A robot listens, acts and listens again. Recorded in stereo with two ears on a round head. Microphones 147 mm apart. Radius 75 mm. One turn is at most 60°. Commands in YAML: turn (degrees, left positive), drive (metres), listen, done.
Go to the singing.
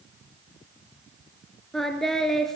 turn: 30
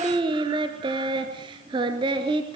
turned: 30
turn: -30
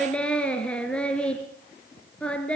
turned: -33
drive: 1.0
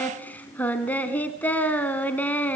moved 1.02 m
turn: 10
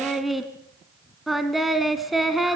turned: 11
drive: 1.0
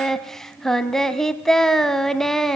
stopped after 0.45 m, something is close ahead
done: "Arrived at the singing, straight ahead."